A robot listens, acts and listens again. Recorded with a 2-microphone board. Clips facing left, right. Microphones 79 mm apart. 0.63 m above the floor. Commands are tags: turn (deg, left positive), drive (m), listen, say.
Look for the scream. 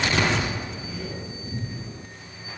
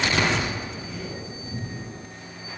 <listen/>
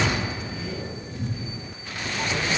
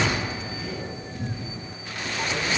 <listen/>
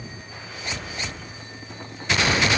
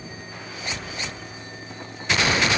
<say>I can't make out a scream to turn to.</say>